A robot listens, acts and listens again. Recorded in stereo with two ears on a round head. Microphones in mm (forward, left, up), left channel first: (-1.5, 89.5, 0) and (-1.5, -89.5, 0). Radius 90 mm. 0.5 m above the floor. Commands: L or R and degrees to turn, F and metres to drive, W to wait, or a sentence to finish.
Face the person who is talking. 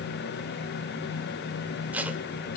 W
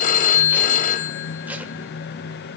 W
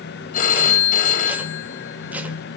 I can't make out anyone speaking, only a phone ringing.